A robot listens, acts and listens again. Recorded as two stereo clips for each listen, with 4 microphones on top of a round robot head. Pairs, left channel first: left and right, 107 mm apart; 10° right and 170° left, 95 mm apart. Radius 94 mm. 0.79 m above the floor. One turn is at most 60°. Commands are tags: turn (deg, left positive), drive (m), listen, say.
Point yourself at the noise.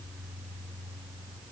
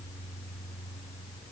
<listen/>
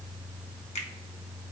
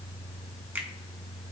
<turn deg="60"/>
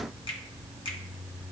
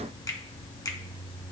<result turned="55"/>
<turn deg="45"/>
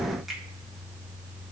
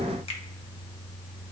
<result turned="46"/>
<say>Found it: a finger snap, straight ahead, 1 to 2 m away.</say>